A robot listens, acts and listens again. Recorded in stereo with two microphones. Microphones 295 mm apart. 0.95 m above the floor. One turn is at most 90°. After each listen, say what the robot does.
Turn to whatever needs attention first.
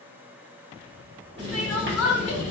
Turn 60° left.
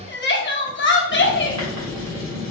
Turn 45° left.
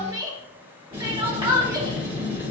Turn 15° right.
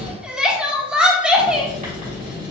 Facing the crying.